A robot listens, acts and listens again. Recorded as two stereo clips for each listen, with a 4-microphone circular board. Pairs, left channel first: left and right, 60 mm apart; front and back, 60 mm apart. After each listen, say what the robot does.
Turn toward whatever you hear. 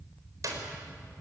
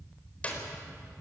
Turn 65° right.
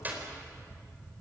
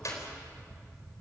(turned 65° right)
Turn 30° right.
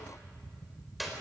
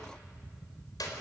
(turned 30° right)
Found it: a clap, straight ahead, over 4 m away.